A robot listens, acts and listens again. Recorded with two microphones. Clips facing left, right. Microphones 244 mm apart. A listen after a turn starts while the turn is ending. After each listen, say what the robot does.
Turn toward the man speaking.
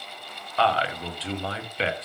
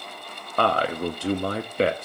Turn 50° right.
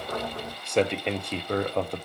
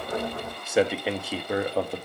Found it: a man speaking, straight ahead, 1 to 2 m away.